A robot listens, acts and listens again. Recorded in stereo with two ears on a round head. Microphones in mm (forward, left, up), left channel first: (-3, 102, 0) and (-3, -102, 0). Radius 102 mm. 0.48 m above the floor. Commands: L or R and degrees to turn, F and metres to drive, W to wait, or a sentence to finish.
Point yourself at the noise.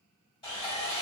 L20
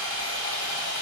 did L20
L135
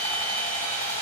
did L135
L25
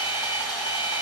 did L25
Found it: sawing, straight ahead, 1 to 2 m away.